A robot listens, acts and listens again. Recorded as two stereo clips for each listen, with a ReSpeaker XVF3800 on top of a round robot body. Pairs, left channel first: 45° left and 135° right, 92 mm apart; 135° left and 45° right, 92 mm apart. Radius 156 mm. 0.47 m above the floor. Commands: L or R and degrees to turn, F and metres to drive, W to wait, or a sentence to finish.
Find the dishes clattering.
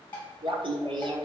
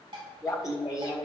R20
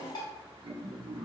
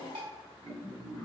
Facing the dishes clattering, 2 to 4 m away.